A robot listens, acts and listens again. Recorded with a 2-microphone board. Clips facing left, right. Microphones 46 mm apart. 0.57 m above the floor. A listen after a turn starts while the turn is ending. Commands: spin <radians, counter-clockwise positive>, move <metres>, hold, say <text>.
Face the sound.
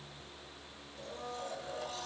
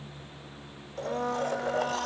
spin -1.13
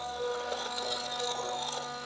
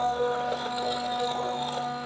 spin -0.26
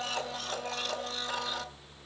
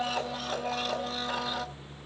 say Found it: a blender, straight ahead.